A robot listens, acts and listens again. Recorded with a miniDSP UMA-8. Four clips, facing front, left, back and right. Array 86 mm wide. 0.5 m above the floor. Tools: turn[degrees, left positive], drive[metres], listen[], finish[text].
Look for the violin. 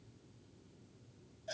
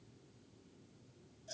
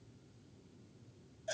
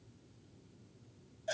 Action: listen[]
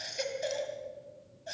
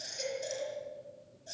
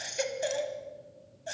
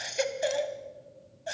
Action: listen[]
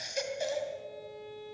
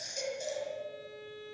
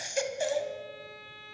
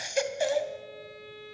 Thought: The violin: 160° right.
Action: turn[-160]
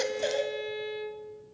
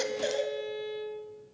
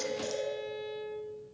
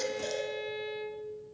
Thought: The violin is now 20° right.
Action: turn[-20]
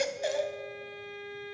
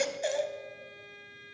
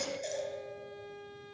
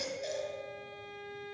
Action: finish[Facing the violin, 2 to 4 m away.]